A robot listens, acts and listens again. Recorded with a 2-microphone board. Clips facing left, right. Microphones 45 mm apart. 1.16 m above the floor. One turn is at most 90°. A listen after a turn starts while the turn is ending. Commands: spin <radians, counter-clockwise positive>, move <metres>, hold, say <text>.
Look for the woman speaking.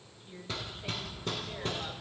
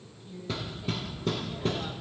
spin 0.52
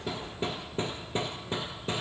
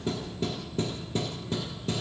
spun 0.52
hold
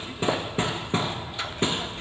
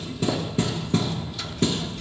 hold
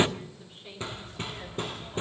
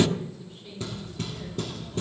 spin 0.35
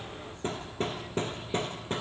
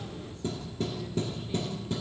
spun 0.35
hold
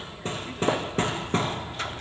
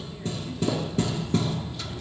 hold
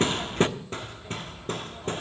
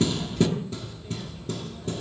say I heard a woman speaking, but can't make it out now. It was about straight ahead or 140° left.